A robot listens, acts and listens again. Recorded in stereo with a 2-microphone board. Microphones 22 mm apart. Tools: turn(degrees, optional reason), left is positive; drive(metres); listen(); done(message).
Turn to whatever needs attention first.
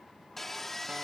listen()
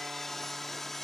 listen()
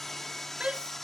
turn(degrees=-60, reason="The shout: about 60° right or 120° right.")
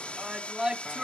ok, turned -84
turn(degrees=-35, reason="So it is at 35° right.")
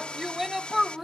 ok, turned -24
turn(degrees=-10, reason="The shout is now 10° right.")
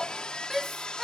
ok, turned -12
done("Found it: a shout, straight ahead.")